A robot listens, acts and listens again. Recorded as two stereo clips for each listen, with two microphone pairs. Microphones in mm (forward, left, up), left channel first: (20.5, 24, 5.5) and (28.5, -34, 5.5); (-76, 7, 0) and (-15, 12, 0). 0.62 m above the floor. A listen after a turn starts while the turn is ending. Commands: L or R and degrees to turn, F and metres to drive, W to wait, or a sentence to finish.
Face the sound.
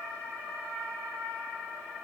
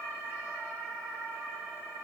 W
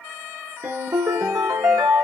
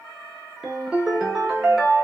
R75
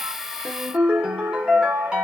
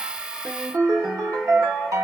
Found it: a ringtone, straight ahead.